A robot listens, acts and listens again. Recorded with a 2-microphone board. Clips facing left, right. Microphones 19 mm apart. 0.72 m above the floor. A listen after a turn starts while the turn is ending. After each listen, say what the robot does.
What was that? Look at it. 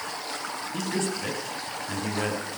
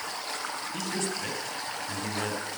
Turn 30° left.
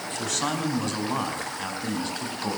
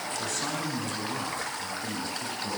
Turn 130° left.
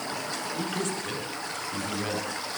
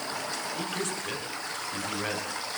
Turn 10° right.
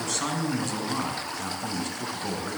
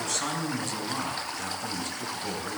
Facing the man speaking, over 4 m away.